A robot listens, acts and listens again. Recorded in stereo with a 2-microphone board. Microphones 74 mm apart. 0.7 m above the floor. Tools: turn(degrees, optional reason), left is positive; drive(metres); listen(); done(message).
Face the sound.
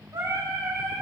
turn(degrees=-65, reason="The singing: about 65° right or 115° right.")
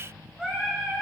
turn(degrees=-10, reason="So it is at 10° right.")
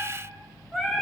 done("Found it: singing, straight ahead.")